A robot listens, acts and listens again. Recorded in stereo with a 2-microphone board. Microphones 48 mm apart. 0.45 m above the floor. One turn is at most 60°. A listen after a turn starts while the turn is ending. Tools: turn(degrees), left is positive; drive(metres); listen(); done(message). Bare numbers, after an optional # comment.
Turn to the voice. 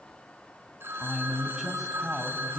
turn(-30)
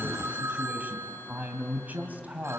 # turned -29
# So it is at 140° right.
turn(-60)
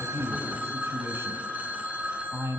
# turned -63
# The man speaking is now 80° right.
turn(-60)
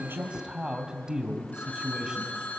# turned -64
# The man speaking is now 15° right.
turn(-15)
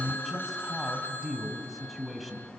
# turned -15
done("Facing the man speaking, 2 to 4 m away.")